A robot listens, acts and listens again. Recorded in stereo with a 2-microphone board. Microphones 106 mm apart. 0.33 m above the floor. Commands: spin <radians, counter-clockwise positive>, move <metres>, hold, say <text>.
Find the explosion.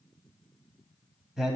hold
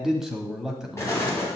spin 0.44
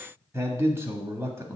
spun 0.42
hold
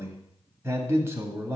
say I heard an explosion, but can't make it out now. It was about 5° left or 130° left.